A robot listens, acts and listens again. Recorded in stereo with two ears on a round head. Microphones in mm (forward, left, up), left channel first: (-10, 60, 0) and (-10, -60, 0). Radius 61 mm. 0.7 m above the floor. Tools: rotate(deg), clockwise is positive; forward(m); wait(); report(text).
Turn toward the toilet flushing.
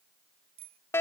wait()
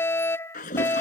rotate(-60)
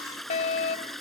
report("Facing the toilet flushing.")